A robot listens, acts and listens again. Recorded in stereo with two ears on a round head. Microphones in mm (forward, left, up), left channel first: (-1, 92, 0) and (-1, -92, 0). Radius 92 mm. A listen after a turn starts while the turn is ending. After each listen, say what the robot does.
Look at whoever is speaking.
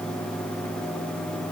Keep listening.
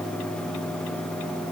Keep listening.
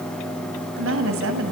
Turn 70° right.
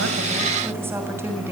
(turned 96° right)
Turn 10° right.
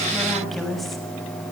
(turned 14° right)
Found it: a woman speaking, straight ahead.